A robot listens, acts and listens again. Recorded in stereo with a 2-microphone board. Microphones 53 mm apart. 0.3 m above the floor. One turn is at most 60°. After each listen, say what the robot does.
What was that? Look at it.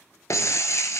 Turn 60° left.
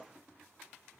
Turn 30° left.
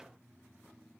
Facing where the breaking glass came from. I can't hear it now.